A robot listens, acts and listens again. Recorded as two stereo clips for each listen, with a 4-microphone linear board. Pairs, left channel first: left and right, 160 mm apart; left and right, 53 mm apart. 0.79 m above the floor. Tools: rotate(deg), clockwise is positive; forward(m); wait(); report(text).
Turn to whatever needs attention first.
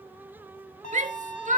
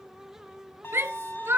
rotate(50)
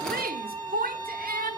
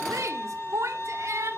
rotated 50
rotate(75)
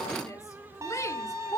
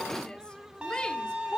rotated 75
rotate(-20)
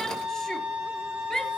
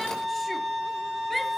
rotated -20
wait()
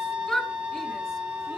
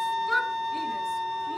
report("Found it: a shout, straight ahead.")